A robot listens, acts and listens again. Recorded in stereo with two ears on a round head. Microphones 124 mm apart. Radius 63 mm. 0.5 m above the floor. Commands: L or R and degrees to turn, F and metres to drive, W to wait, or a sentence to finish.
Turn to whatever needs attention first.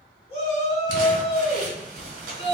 L50
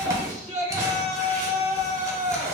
L75
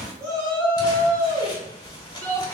L20
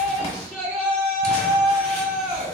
Facing the shout.